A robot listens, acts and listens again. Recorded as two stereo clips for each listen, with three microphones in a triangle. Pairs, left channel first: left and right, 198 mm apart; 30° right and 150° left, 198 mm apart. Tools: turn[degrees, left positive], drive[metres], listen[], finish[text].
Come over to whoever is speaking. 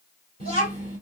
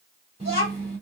Thought: The child speaking: 145° right.
Action: turn[-145]
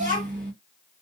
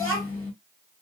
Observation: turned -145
Thought: The child speaking is now 35° right.
Action: turn[-35]
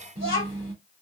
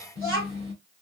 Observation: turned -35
Thought: The child speaking is now 25° right.
Action: turn[-25]
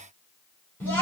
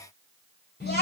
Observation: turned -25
Thought: The child speaking is now 10° left.
Action: turn[10]
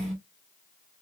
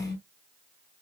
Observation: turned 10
Action: drive[1.0]
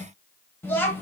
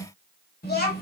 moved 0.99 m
Thought: The child speaking is now 10° left.
Action: turn[10]
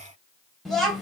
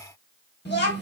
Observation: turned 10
Action: drive[1.0]
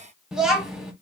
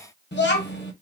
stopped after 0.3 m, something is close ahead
Action: finish[I am next to the child speaking.]